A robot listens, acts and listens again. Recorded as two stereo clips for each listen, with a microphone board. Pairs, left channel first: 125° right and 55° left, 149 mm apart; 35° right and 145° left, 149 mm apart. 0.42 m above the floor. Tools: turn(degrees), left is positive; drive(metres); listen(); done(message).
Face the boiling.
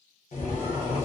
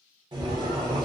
turn(degrees=-160)
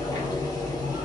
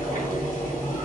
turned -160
turn(degrees=-60)
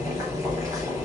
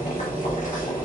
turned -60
turn(degrees=-15)
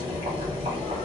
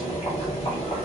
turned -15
done("Facing the boiling.")